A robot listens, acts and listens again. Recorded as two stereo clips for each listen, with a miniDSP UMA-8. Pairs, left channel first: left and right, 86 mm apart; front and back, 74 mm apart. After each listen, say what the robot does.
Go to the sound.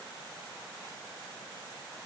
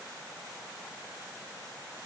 Keep listening.
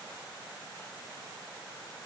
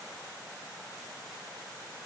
Keep listening.
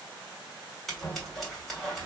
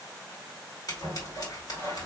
Drive 1.0 m forward.
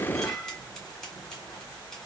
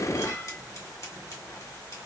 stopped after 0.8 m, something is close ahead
Turn 10° left.
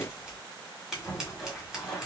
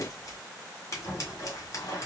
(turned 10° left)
I am next to the scissors.